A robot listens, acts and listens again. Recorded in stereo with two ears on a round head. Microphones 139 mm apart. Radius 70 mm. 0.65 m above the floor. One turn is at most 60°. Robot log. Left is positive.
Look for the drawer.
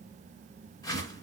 cmd idle
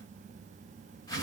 cmd idle
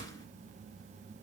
end: I can't make out a drawer to turn to.